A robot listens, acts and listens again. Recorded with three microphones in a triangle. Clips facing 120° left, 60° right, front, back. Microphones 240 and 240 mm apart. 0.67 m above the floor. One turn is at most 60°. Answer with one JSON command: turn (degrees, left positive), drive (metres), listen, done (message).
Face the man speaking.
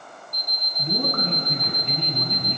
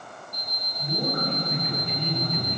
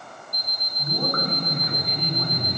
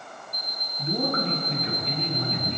{"turn": 60}
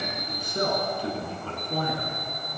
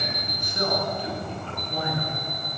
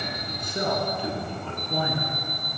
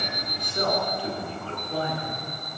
{"turn": 60}
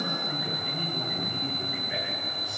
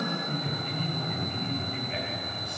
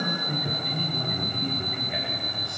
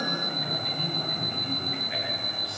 {"turn": 40}
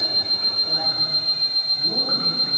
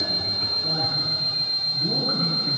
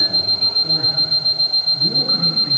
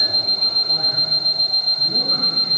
{"listen": true}
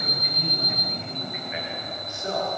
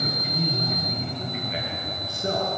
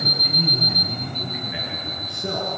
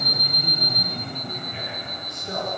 {"done": "Found it: a man speaking, straight ahead, over 4 m away."}